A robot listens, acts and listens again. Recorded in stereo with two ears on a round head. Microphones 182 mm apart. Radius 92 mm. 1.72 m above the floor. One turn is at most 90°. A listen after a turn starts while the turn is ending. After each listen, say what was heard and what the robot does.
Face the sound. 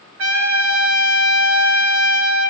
Turn 90° right.
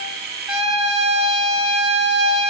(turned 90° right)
Facing the trumpet.